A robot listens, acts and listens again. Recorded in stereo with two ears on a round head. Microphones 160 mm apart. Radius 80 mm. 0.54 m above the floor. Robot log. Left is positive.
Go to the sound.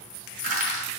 note: The crushing: about 60° right or 120° right.
cmd yaw -60
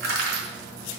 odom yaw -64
note: So it is at 55° right.
cmd yaw -55
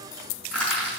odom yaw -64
cmd fwd 1.0
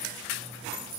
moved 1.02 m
cmd idle
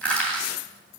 cmd fwd 1.0
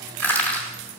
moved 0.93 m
note: The crushing is now 10° left.
cmd yaw +10
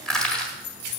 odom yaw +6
cmd fwd 1.0
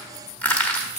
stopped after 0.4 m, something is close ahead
note: The crushing is now 10° left.
cmd yaw +10
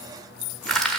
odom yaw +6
end: Arrived at the crushing, straight ahead.